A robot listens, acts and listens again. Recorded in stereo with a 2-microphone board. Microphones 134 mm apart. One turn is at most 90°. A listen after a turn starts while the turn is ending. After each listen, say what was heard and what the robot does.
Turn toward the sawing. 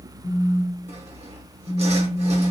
The sawing: about 55° right or 125° right. Turn 55° right.
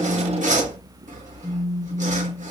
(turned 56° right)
So it is at 70° right. Turn 70° right.
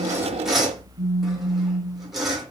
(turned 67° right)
Found it: sawing, straight ahead.